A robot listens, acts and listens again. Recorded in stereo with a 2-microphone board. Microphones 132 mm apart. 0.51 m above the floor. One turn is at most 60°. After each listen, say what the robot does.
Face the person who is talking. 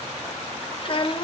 Turn 45° left.
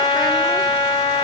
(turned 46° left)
Keep listening.
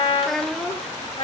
Found it: a child speaking, straight ahead, 1 to 2 m away.